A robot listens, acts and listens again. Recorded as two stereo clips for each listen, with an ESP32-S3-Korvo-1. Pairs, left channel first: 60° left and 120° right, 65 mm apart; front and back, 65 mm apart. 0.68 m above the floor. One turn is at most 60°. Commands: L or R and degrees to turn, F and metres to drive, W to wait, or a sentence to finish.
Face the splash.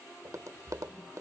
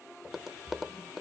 R60
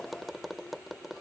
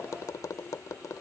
R60
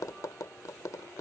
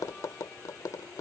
R25
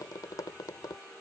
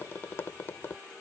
Facing where the splash came from. I can't hear it now.